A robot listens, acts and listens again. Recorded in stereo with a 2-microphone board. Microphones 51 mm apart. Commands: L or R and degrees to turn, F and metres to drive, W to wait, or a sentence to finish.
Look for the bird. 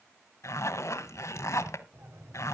R60
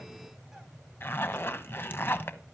Facing the bird.